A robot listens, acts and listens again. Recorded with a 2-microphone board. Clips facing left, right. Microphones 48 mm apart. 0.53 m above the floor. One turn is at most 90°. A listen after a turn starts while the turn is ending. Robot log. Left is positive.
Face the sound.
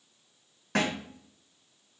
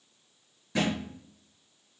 note: The thud: about 65° left or 115° left.
cmd yaw +65
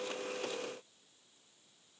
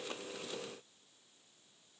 cmd idle
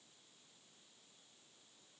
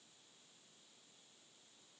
end: I heard a thud, but can't make it out now. It was about straight ahead or 50° left.